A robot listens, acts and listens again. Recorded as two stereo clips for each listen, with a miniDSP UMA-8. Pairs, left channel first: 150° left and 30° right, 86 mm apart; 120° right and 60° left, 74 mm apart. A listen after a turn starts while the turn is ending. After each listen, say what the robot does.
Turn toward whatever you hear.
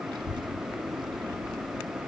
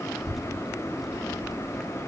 Turn 30° right.
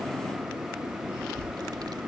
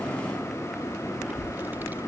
Found it: a child speaking, straight ahead.